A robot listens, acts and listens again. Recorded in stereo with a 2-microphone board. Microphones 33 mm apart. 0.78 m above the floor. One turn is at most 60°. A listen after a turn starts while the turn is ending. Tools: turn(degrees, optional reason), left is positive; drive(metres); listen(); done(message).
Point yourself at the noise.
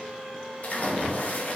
turn(degrees=50, reason="The splash: about 50° left or 130° left.")
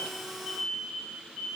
listen()
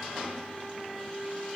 done("I heard a splash, but can't make it out now. It was about straight ahead or 80° left.")